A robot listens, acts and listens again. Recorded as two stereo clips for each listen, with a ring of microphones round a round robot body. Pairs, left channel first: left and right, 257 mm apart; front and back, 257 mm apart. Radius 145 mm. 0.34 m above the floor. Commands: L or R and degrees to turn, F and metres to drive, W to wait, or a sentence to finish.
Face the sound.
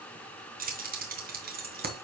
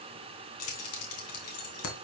R35
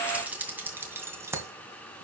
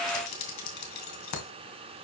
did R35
R10
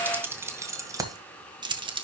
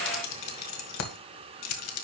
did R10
R20
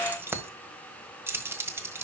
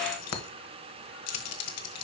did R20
R10
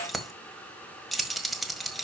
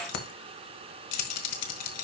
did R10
Facing the keys jangling, 1 to 2 m away.